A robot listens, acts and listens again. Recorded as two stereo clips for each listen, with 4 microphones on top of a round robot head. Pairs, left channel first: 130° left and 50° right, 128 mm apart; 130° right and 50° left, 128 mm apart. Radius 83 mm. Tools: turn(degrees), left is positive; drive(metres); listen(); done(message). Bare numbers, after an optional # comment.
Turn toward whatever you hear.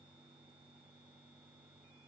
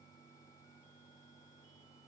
listen()
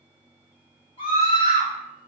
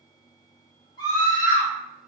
# The scream: 170° left.
turn(170)
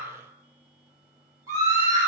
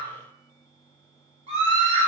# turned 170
# The scream is now 15° left.
turn(15)
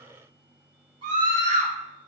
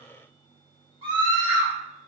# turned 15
done("Found it: a scream, straight ahead, 1 to 2 m away.")